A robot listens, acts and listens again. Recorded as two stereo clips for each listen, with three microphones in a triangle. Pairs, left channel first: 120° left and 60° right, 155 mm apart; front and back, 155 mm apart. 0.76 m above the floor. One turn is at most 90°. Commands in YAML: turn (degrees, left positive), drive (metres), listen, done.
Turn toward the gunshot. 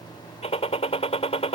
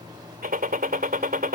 turn: 90
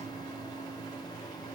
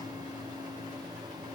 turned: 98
turn: 70
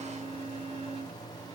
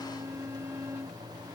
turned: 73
done: "I heard a gunshot from this way, but can't make it out now."